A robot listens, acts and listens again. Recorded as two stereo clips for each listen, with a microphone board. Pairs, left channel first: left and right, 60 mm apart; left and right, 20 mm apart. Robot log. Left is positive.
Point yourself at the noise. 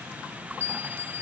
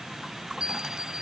note: The bell: about 50° right or 130° right.
cmd yaw -50
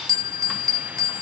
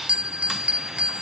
note: So it is at 85° right.
cmd yaw -85
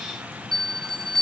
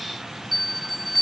end: Found it: a bell, straight ahead.